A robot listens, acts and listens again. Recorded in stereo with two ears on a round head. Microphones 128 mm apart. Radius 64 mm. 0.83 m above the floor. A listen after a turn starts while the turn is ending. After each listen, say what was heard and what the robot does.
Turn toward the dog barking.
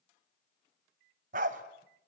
The dog barking: about 60° right or 120° right. Turn 60° right.
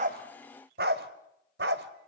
So it is at 85° right. Turn 85° right.
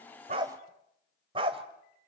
The dog barking is now 35° right. Turn 35° right.
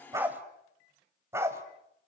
The dog barking is now 20° right. Turn 20° right.
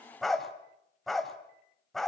Facing the dog barking, 2 to 4 m away.